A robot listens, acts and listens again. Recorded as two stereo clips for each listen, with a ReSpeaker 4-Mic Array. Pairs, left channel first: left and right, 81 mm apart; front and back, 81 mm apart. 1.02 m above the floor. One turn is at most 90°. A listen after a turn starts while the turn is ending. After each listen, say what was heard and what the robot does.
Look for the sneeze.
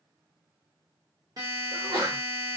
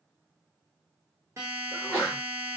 The sneeze: 75° right. Turn 75° right.
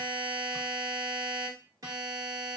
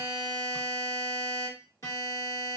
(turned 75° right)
I heard a sneeze from this way, but can't make it out now.